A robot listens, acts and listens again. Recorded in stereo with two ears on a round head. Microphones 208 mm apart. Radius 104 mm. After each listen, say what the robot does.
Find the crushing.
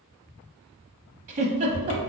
Keep listening.
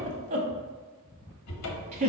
Keep listening.
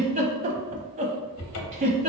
I can't make out crushing to turn to.